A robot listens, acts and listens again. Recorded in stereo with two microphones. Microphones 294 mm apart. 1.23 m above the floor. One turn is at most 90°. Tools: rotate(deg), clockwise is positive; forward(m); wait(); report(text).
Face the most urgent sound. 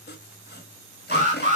rotate(25)
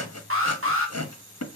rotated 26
rotate(90)
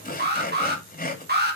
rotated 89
rotate(40)
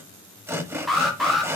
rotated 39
report("Facing the alarm.")